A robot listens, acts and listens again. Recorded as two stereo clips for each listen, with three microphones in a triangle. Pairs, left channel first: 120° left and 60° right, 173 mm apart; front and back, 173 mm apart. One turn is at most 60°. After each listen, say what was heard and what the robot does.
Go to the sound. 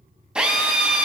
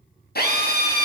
The drill: 25° left. Turn 25° left.
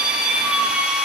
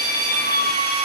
The drill is now 25° left. Turn 25° left.
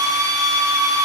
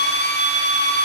The drill is now 10° left. Turn 10° left.
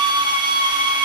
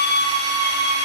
Drive 1.0 m forward.
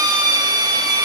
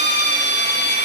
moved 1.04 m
The drill is now 10° left. Turn 10° left.
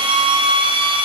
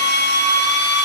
Drive 1.0 m forward.
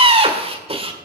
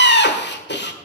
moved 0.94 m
Drive 1.0 m forward.
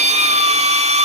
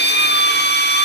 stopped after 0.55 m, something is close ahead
The drill is now 10° right. Turn 10° right.
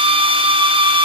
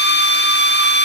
Arrived at the drill, straight ahead.